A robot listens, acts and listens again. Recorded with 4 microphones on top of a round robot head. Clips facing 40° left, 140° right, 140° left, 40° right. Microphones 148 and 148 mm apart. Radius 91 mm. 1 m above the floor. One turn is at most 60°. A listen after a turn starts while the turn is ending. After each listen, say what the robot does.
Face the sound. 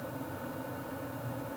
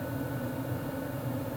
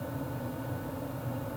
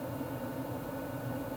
Keep listening.
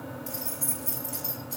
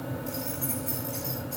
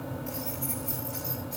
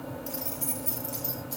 Found it: keys jangling, straight ahead.